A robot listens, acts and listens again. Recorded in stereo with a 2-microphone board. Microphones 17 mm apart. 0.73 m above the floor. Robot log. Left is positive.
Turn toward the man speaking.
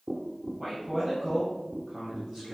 cmd yaw +30
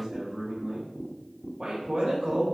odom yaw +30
note: So it is at 30° right.
cmd yaw -30
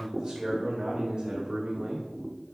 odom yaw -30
note: The man speaking is now 30° right.
cmd yaw -30
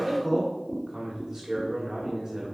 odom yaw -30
end: Found it: a man speaking, straight ahead.